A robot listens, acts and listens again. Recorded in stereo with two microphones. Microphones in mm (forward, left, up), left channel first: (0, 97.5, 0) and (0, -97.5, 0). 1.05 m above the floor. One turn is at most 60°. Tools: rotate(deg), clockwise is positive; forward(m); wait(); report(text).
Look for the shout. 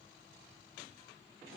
wait()
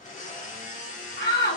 rotate(-60)
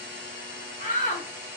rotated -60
rotate(-40)
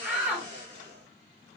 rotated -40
report("Facing the shout.")